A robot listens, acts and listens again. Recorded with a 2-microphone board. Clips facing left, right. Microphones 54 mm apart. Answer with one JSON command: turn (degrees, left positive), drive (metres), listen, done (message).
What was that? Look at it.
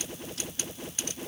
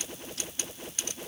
{"listen": true}
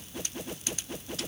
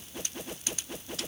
{"listen": true}
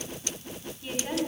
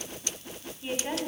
{"turn": -15}
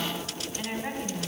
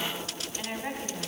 {"done": "Found it: a woman speaking, straight ahead, 2 to 4 m away."}